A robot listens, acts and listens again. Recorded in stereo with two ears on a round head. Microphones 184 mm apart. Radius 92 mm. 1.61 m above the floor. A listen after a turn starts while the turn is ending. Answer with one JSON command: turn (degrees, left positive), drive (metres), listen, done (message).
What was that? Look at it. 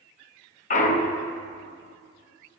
{"turn": 35}
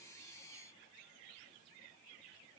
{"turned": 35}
{"listen": true}
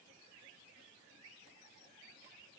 {"done": "I heard a clunk, but can't make it out now. It was about straight ahead or 110° left."}